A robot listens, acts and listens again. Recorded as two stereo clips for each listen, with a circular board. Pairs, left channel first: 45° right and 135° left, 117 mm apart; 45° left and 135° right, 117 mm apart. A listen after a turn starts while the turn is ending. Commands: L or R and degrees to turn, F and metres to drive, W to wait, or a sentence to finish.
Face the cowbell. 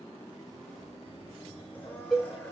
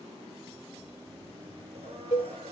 L50
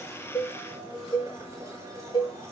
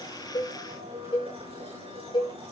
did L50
Found it: a cowbell, straight ahead.